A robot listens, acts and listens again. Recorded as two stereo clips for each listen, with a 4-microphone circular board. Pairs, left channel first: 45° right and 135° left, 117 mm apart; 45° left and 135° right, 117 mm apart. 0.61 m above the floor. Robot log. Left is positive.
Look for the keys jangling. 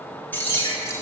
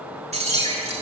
note: The keys jangling: 115° right.
cmd yaw -115
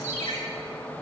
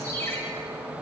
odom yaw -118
cmd idle
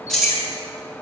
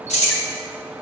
note: The keys jangling is now 45° left.
cmd yaw +45
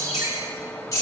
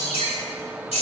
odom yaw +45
note: The keys jangling is now 15° left.
cmd yaw +15
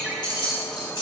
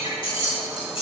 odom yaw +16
end: Found it: keys jangling, straight ahead, 2 to 4 m away.